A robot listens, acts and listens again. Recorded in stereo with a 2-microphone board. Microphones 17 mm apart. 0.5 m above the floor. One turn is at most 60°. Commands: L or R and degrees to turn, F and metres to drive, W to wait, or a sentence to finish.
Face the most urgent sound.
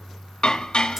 W
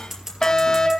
L40
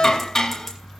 W
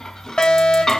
L60
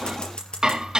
L35
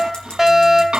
R15
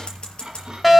Facing the fire alarm.